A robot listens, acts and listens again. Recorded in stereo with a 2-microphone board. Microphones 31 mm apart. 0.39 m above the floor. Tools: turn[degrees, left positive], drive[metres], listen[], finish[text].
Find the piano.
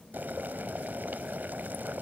Action: listen[]
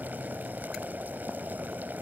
Action: listen[]
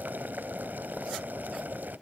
Action: finish[I can't make out a piano, only boiling.]